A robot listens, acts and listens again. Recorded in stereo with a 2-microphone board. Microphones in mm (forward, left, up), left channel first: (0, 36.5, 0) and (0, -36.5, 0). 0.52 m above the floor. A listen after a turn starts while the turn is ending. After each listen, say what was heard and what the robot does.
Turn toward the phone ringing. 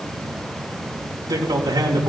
Keep listening.
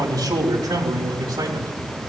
Keep listening.
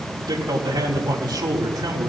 I can't make out a phone ringing, only a man speaking.